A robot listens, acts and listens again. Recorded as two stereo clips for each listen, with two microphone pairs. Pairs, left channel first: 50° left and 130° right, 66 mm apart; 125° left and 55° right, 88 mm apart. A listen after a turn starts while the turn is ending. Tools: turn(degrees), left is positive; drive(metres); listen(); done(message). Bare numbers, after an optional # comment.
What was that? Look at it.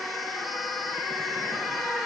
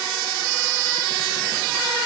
listen()
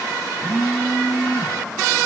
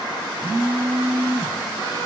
# The phone buzzing: 70° right.
turn(-70)
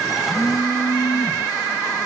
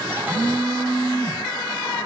done("Facing the phone buzzing.")